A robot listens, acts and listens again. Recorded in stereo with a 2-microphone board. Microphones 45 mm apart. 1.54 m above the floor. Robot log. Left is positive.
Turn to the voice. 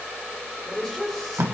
cmd yaw +30
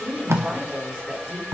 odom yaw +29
note: So it is at 25° right.
cmd yaw -25
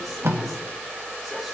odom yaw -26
cmd idle
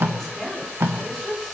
end: Found it: a woman speaking, straight ahead, over 4 m away.